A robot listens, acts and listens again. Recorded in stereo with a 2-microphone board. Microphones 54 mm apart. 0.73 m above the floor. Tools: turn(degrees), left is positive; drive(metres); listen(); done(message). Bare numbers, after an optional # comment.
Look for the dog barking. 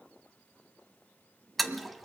listen()
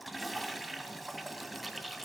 listen()
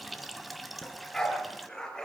turn(30)
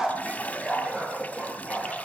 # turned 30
# So it is at 15° right.
turn(-15)
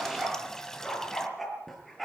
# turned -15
done("Facing the dog barking, over 4 m away.")